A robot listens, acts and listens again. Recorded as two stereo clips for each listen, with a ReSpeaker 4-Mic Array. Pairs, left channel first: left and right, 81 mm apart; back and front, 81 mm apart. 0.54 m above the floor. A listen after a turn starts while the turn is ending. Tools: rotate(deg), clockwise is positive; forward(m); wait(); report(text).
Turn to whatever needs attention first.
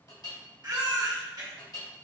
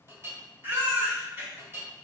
rotate(60)
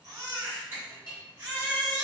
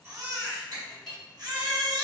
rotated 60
rotate(20)
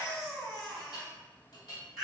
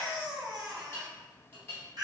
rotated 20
report("Found it: a baby crying, straight ahead.")